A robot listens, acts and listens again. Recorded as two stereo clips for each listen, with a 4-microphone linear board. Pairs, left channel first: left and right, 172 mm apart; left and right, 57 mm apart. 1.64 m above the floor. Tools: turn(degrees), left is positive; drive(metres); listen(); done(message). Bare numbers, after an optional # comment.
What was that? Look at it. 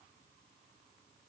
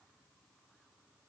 listen()
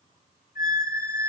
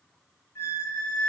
# The squeak: about 60° left or 120° left.
turn(60)
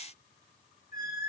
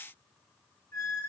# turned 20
# So it is at 85° left.
turn(85)
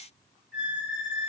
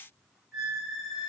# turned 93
done("Facing the squeak.")